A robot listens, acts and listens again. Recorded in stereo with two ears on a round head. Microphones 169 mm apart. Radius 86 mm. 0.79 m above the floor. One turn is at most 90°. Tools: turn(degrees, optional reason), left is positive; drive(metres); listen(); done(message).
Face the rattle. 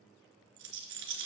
turn(degrees=-90)
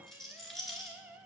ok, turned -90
done("Facing the rattle, 2 to 4 m away.")